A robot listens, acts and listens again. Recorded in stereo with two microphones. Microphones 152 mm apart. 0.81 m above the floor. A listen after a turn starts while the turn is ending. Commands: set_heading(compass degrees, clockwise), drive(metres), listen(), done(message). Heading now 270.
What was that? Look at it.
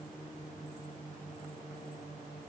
listen()
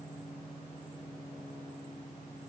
listen()
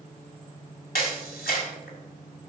set_heading(180)
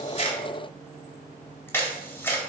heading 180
set_heading(165)
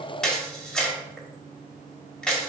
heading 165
done("Facing the camera shutter.")